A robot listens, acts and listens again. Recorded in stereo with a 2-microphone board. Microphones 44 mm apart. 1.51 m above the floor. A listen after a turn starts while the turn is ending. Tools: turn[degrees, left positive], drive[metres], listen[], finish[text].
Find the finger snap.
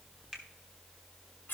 Action: listen[]
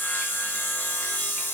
Action: listen[]
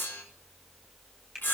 Action: turn[30]
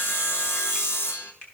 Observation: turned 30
Thought: So it is at 140° left.
Action: turn[140]
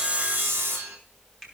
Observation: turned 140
Thought: The finger snap is now 15° right.
Action: turn[-15]
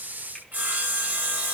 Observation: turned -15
Action: listen[]
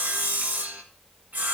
Action: listen[]
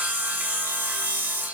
Action: finish[Facing where the finger snap came from. I can't hear it now.]